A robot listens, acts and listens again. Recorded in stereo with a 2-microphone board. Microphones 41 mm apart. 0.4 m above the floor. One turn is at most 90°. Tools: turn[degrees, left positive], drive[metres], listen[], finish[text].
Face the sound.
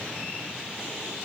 Action: listen[]
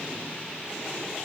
Action: listen[]
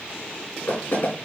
Thought: The knocking: about 55° left or 125° left.
Action: turn[55]
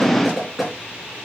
Action: finish[Found it: knocking, straight ahead.]